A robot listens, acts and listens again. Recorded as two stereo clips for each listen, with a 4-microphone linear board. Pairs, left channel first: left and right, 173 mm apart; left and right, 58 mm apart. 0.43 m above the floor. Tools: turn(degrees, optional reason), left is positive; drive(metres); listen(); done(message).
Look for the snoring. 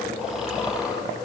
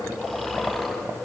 turn(degrees=-30)
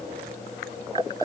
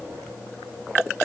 listen()
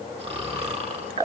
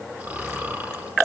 turn(degrees=-150, reason="So it is at 150° right.")
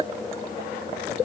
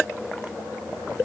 listen()
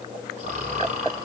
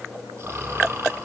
turn(degrees=-40, reason="The snoring is now 40° right.")
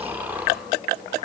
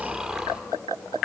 turn(degrees=-10, reason="The snoring is now 10° right.")
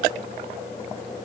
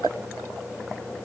listen()
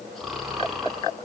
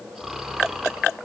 done("Found it: snoring, straight ahead, over 4 m away.")